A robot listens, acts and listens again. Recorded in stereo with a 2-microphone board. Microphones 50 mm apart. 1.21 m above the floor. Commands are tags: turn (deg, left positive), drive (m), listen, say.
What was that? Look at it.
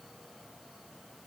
<listen/>
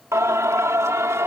<turn deg="-90"/>
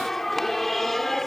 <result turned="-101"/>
<say>Found it: singing, straight ahead.</say>